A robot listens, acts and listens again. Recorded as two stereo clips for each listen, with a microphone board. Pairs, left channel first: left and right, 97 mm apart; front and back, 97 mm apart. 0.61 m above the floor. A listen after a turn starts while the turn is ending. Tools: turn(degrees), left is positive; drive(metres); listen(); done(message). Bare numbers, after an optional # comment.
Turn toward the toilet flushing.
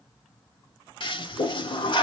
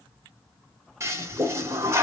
# The toilet flushing: 120° left.
turn(120)
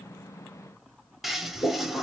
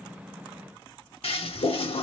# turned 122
done("Found it: a toilet flushing, straight ahead.")